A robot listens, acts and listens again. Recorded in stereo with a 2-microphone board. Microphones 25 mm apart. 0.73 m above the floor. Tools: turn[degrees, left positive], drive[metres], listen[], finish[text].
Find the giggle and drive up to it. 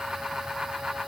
Action: listen[]
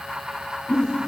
Thought: The giggle: about 30° left or 150° left.
Action: turn[30]
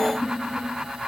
Thought: So it is at 120° left.
Action: turn[120]
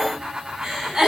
Thought: The giggle is now 15° right.
Action: turn[-15]
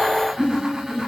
Action: drive[1.0]
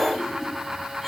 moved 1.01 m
Action: listen[]
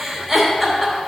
Action: drive[1.0]
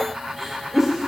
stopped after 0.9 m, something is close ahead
Action: finish[I am next to the giggle.]